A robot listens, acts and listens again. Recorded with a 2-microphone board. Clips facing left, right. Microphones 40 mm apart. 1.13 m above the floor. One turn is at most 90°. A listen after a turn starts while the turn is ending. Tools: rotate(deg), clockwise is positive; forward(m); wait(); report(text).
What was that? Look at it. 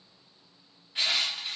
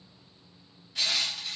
rotate(-25)
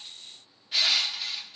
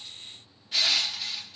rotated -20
rotate(-10)
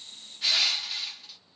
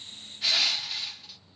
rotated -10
report("Found it: crushing, straight ahead, 1 to 2 m away.")